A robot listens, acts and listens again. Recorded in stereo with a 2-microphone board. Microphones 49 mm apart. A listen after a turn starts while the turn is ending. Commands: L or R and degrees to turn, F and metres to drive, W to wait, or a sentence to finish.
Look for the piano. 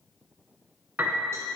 R40
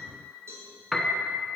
Facing the piano, 1 to 2 m away.